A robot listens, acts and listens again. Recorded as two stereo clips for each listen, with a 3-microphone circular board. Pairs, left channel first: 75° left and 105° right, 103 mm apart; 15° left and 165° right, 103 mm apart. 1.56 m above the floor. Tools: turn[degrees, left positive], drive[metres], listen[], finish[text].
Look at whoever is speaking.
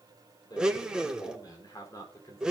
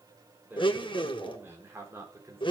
Thought: The man speaking: 130° left.
Action: turn[130]
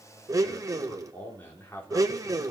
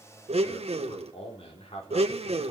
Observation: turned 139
Action: finish[Found it: a man speaking, straight ahead.]